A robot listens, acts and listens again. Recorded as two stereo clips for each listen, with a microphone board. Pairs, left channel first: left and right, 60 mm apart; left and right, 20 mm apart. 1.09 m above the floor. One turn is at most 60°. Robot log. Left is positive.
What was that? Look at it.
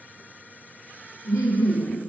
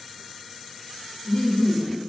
note: The laughter: about 55° left or 125° left.
cmd yaw +55
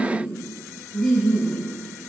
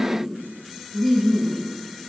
note: So it is at 10° right.
cmd yaw -10
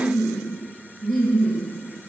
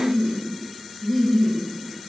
end: Facing the laughter.